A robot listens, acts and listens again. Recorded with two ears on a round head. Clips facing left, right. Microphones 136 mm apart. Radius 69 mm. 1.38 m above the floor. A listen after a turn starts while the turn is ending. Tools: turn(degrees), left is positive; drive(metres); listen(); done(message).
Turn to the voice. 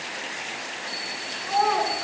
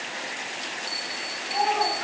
turn(degrees=90)
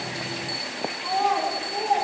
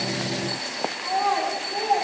done("Found it: a child speaking, straight ahead, over 4 m away.")